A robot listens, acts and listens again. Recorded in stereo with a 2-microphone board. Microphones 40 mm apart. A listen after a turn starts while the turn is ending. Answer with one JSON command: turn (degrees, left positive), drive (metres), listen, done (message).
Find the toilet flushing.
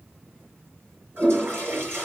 {"turn": -60}
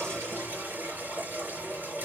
{"turn": -60}
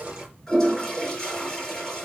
{"turn": 10}
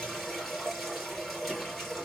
{"done": "Facing the toilet flushing, over 4 m away."}